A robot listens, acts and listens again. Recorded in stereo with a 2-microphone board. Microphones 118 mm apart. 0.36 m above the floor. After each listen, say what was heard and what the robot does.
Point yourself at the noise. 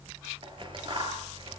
The scissors: about 40° right or 140° right. Turn 40° right.
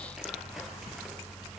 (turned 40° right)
Keep listening.
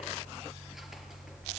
Keep listening.
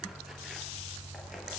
I heard scissors, but can't make it out now. It was about straight ahead or 100° right.